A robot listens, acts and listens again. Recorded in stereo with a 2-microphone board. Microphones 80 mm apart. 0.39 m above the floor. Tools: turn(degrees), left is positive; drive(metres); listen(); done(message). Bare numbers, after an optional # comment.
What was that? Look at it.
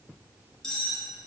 turn(30)
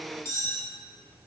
# So it is at 140° left.
turn(140)
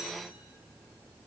listen()
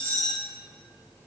# The cutlery clinking is now 15° left.
turn(15)
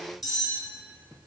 done("Facing the cutlery clinking.")